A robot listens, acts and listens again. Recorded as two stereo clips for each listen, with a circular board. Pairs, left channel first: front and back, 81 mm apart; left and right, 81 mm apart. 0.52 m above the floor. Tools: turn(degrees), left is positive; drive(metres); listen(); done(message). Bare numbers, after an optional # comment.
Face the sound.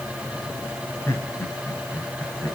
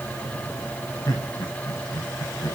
# The laughter: 65° left.
turn(65)
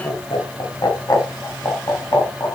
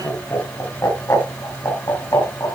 # The laughter is now 45° left.
turn(45)
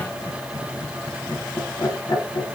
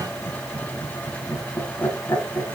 # The laughter is now 30° left.
turn(30)
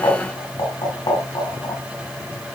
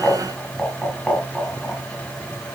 done("Facing the laughter, 2 to 4 m away.")